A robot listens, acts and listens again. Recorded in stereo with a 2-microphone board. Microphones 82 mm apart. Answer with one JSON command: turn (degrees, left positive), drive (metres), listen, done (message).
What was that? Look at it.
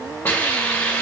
{"turn": 25}
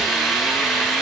{"done": "Facing the hiss."}